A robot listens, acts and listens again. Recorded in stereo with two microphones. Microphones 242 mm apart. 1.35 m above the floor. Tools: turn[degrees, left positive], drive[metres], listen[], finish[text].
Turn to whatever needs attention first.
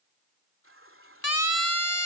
Action: turn[90]
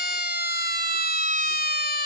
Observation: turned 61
Thought: So it is at 40° left.
Action: turn[40]
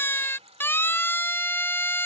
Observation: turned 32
Thought: The siren is now 10° left.
Action: turn[10]
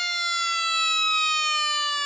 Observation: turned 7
Action: finish[Found it: a siren, straight ahead.]